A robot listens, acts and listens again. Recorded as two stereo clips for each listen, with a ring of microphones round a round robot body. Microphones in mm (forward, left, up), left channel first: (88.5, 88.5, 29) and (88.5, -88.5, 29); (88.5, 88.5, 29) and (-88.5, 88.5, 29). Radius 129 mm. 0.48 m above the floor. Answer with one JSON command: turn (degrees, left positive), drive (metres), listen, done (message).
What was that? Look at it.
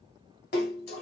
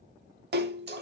{"turn": 145}
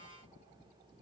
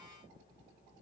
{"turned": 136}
{"turn": 10}
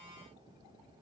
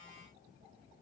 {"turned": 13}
{"done": "Facing where the splash came from. I can't hear it now."}